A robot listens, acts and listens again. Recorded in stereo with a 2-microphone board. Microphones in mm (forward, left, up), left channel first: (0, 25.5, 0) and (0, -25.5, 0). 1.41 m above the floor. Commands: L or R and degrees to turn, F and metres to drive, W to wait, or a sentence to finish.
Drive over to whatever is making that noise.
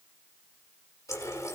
L75
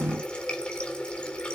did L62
L15
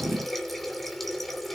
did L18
F1.0
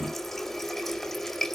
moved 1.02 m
F1.0
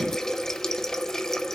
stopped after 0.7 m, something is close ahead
L10
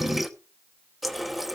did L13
I am next to the running tap.